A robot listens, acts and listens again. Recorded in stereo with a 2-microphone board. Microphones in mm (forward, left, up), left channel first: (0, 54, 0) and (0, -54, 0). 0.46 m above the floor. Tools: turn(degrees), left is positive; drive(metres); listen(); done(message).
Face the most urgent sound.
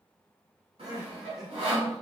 turn(degrees=-40)
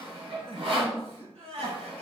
turn(degrees=-100)
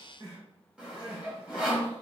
turn(degrees=-50)
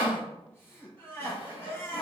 turn(degrees=20)
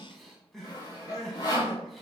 done("Facing the crying.")